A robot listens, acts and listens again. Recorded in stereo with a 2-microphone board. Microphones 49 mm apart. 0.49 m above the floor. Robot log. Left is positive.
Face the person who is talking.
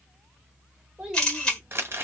note: The child speaking: about 25° right or 155° right.
cmd yaw -25
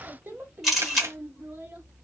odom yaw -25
note: So it is at 130° right.
cmd yaw -130
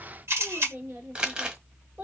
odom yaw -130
note: The child speaking is now 55° right.
cmd yaw -55
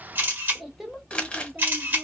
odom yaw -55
note: The child speaking is now 10° right.
cmd yaw -10
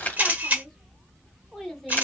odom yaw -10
end: Facing the child speaking.